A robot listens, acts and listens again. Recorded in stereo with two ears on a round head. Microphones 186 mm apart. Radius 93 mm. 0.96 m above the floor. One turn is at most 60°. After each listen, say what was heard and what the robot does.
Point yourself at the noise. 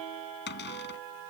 The cupboard door: about 55° left or 125° left. Turn 55° left.
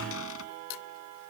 Keep listening.
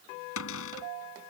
So it is at 70° left. Turn 60° left.
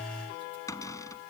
The cupboard door is now 15° left. Turn 15° left.
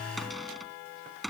Found it: a cupboard door, straight ahead.